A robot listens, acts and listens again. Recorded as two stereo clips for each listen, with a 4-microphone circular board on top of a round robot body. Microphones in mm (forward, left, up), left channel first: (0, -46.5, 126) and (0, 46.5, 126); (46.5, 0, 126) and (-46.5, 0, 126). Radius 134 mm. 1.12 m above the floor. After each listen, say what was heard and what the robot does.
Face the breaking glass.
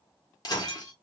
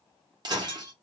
The breaking glass: 135° right. Turn 135° right.
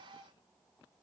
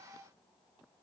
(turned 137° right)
I heard breaking glass from this way, but can't make it out now.